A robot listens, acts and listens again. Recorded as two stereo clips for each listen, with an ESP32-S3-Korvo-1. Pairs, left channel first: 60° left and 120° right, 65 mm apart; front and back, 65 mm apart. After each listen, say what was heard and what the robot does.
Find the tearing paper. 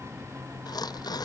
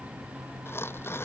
The tearing paper: 55° left. Turn 55° left.
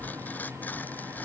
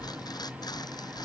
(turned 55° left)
Found it: tearing paper, straight ahead.